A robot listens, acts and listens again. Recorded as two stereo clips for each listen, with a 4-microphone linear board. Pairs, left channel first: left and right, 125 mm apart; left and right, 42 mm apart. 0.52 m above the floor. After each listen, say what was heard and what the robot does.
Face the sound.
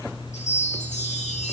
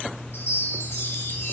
The chime: about 70° left or 110° left. Turn 70° left.
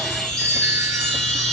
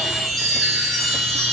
Found it: a chime, straight ahead.